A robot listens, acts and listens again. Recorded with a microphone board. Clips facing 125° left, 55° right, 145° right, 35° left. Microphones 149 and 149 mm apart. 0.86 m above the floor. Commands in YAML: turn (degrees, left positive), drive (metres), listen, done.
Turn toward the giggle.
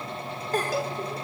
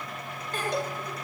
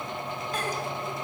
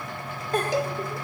turn: 75
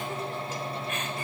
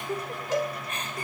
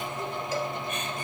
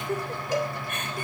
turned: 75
done: "Found it: a giggle, straight ahead."